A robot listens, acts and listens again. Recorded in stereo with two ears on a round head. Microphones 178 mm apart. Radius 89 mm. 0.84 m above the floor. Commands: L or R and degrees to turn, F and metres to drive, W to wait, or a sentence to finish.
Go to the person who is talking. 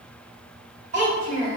R40
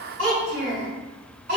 R100
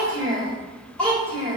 F1.0
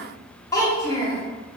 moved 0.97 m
L15
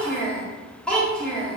F1.0
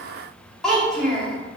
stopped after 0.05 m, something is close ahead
I am next to the child speaking.